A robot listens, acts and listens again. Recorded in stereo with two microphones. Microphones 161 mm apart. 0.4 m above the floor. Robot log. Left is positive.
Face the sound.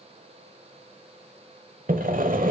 note: The sawing: about 60° right or 120° right.
cmd yaw -60
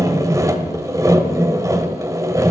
note: So it is at 25° right.
cmd yaw -25
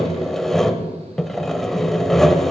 end: Facing the sawing.